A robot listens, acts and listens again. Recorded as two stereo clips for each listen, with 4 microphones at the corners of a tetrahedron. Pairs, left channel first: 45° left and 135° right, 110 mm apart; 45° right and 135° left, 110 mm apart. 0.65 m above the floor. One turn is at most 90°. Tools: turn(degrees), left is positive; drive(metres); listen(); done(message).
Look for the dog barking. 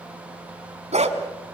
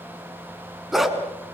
turn(degrees=-90)
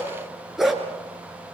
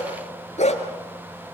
turn(degrees=-45)
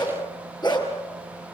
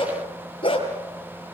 done("Found it: a dog barking, straight ahead.")